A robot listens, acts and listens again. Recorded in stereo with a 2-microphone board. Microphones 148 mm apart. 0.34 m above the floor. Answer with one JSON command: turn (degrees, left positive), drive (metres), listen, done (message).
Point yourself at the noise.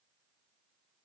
{"listen": true}
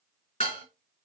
{"turn": 45}
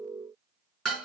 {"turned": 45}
{"done": "Facing the dishes clattering, 2 to 4 m away."}